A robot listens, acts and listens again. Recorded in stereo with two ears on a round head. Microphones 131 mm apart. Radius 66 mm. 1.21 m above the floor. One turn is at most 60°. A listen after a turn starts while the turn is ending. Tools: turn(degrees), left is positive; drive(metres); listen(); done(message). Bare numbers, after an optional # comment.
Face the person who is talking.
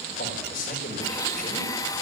# The man speaking: about 65° left or 115° left.
turn(60)
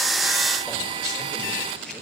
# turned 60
listen()
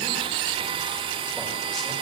listen()
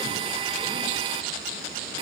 done("I heard a man speaking, but can't make it out now. It was about 5° left or 55° left.")